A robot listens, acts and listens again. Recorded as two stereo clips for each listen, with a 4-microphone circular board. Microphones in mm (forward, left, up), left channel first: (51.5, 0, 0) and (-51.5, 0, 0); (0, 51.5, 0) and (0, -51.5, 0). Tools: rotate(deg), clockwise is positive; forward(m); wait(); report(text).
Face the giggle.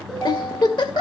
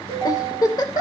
rotate(-45)
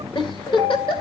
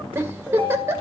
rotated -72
rotate(25)
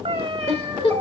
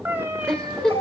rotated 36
rotate(-10)
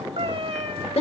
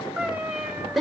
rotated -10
report("Facing the giggle, 2 to 4 m away.")